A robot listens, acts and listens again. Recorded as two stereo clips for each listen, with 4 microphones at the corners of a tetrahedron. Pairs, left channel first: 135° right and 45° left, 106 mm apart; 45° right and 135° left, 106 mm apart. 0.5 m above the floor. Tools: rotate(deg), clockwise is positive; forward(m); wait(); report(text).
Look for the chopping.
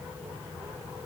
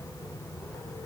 wait()
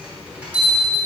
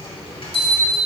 wait()
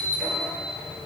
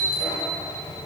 report("I can't make out chopping to turn to.")